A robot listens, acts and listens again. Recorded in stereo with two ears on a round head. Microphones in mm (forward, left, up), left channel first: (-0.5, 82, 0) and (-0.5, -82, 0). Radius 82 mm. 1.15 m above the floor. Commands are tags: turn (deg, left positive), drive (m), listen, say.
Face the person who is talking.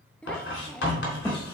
<turn deg="30"/>
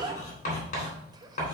<turn deg="-25"/>
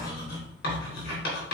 <listen/>
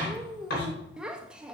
<say>Facing the child speaking, under 1 m away.</say>